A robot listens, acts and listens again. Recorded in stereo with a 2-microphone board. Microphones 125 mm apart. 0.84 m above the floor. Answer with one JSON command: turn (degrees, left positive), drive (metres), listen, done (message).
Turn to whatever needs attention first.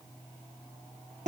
{"listen": true}
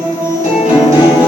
{"listen": true}
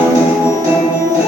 {"done": "I can't make out anything urgent to turn to."}